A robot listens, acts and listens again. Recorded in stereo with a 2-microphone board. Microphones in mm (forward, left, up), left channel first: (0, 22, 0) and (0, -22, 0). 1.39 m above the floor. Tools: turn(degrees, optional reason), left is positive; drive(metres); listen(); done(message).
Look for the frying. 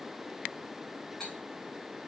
listen()
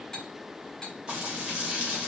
turn(degrees=-20, reason="The frying: about 20° right or 160° right.")
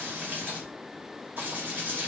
turn(degrees=-135, reason="So it is at 135° right.")
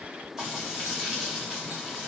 turn(degrees=-15, reason="The frying is now 15° right.")
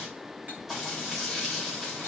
done("Found it: frying, straight ahead, 2 to 4 m away.")